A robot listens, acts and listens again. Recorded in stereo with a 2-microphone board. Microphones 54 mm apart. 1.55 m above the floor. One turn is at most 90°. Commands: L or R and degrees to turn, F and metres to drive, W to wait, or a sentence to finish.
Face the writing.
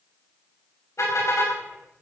W
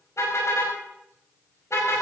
W
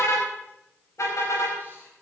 I can't make out writing to turn to.